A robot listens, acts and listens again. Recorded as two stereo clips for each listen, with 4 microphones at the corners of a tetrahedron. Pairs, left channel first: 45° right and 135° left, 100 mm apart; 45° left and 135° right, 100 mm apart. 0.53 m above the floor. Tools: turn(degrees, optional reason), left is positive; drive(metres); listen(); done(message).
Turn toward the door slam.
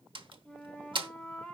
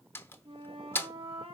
turn(degrees=110, reason="The door slam: 110° left.")
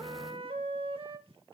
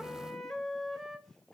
done("I heard a door slam from this way, but can't make it out now.")